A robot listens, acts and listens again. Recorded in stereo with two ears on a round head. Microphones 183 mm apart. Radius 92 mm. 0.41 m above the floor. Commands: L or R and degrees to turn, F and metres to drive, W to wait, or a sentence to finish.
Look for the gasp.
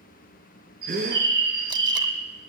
R55
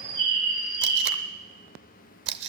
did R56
W
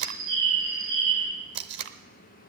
I heard a gasp, but can't make it out now. It was about 5° left or 70° right.